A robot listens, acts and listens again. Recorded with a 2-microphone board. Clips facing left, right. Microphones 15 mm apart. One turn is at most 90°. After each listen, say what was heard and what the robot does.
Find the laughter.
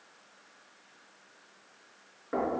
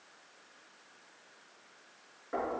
Keep listening.
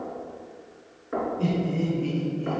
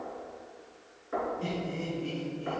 The laughter: about 75° left or 105° left. Turn 75° left.
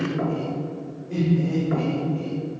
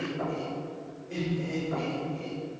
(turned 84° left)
Found it: laughter, straight ahead.